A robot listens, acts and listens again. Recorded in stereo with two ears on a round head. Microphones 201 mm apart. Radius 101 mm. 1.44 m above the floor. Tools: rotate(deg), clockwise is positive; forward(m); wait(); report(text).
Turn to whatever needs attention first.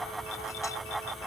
wait()
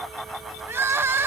rotate(30)
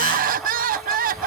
rotate(140)
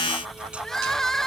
report("Found it: crying, straight ahead.")